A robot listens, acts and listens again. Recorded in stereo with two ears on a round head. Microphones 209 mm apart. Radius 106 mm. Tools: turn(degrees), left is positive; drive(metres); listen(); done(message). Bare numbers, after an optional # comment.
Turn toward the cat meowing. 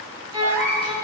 turn(-90)
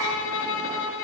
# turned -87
listen()
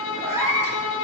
# The cat meowing is now 15° right.
turn(-15)
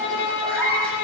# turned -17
done("Found it: a cat meowing, straight ahead, over 4 m away.")